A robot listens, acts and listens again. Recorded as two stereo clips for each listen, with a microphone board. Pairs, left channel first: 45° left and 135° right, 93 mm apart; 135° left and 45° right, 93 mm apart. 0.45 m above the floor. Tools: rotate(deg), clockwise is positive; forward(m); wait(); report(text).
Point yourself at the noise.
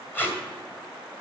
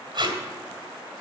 rotate(20)
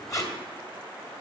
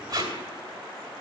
report("Facing the tape being pulled.")